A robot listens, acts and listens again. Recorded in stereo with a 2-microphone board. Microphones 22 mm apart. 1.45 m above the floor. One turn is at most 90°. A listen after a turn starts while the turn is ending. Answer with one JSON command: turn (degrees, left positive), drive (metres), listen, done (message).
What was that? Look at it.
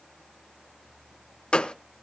{"turn": 50}
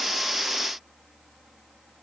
{"listen": true}
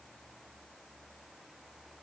{"done": "I heard a gunshot, but can't make it out now. It was about straight ahead or 80° left."}